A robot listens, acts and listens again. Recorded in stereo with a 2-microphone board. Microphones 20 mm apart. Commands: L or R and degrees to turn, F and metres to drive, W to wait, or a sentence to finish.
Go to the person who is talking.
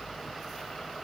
W
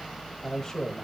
L25
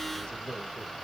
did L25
L130
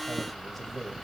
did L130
F1.0
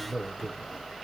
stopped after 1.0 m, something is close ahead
L10
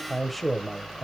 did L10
Arrived at the man speaking, straight ahead.